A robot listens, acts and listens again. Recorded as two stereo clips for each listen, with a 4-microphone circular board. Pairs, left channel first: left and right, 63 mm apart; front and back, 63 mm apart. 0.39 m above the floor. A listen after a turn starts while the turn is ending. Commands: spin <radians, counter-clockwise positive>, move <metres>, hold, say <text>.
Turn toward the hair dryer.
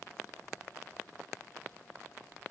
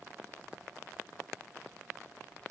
hold
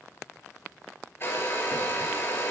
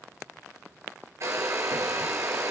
spin 2.44
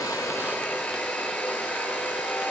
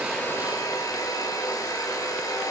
spin 0.35
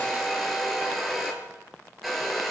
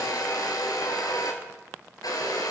say Found it: a hair dryer, straight ahead.